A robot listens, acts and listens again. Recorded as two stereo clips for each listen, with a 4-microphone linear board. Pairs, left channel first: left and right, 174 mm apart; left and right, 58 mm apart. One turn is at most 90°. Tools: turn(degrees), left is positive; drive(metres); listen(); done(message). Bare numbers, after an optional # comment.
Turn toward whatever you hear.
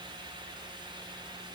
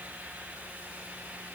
listen()
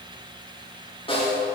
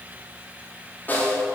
# The snare drum: about 30° left or 150° left.
turn(30)
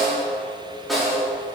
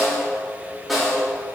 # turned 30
done("Found it: a snare drum, straight ahead.")